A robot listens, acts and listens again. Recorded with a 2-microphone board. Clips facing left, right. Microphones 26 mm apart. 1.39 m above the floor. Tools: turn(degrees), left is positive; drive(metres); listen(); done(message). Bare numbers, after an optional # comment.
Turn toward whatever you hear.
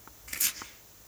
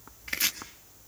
# The chopping: about 35° right or 145° right.
turn(-35)
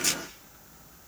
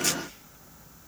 listen()
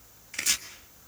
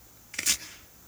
done("Found it: chopping, straight ahead.")